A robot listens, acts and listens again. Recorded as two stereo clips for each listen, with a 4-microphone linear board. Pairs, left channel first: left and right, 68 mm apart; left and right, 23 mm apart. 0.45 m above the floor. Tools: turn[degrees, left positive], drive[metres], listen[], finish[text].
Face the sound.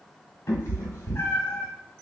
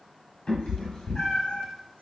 Thought: The cat meowing: about 35° left or 145° left.
Action: turn[35]
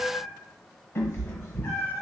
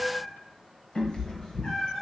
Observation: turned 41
Thought: The cat meowing: about 30° left or 150° left.
Action: turn[30]
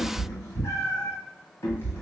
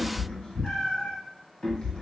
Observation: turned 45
Thought: The cat meowing: about 40° left or 140° left.
Action: turn[40]
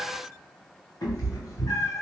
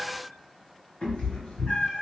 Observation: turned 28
Thought: So it is at 115° left.
Action: turn[115]
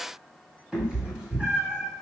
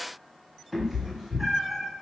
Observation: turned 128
Thought: The cat meowing is now 15° right.
Action: turn[-15]
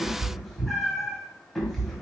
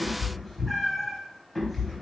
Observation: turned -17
Action: finish[Facing the cat meowing.]